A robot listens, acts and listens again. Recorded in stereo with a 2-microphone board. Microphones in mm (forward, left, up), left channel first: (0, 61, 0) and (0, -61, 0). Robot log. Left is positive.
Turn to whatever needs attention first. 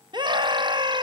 note: The scream: about 40° right or 140° right.
cmd yaw -40
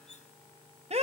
note: So it is at 95° right.
cmd yaw -95
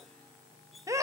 note: The scream is now 30° right.
cmd yaw -30
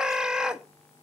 note: The scream is now 10° right.
cmd yaw -10
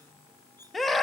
end: Found it: a scream, straight ahead.